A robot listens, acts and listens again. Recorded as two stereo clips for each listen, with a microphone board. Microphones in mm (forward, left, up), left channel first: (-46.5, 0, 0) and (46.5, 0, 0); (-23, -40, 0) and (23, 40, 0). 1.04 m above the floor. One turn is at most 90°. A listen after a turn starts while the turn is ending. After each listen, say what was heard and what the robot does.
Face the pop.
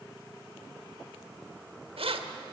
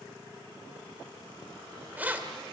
Keep listening.
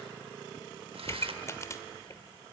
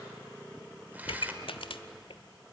The pop: 125° right. Turn 90° right.
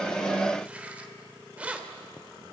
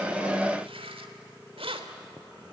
Nothing new. It was at 35° right. Turn 35° right.
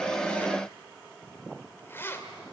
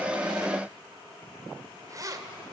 I heard a pop from this way, but can't make it out now.